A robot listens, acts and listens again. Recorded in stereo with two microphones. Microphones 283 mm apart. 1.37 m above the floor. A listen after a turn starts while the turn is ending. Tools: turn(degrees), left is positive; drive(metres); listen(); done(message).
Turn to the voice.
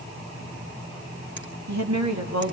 turn(degrees=-90)
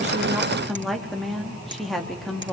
done("Facing the woman speaking.")